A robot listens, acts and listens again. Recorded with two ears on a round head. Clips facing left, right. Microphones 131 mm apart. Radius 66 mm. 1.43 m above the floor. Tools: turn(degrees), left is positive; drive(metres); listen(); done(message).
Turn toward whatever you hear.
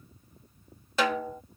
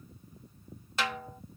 turn(degrees=90)
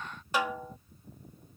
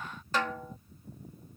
turn(degrees=10)
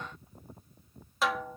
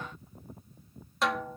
done("Facing the snare drum.")